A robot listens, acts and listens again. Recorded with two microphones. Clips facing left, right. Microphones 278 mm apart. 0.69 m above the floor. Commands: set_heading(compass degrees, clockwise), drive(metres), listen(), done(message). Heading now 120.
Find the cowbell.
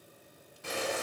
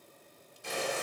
listen()
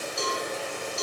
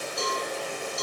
set_heading(55)
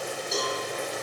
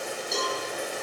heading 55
done("Facing the cowbell.")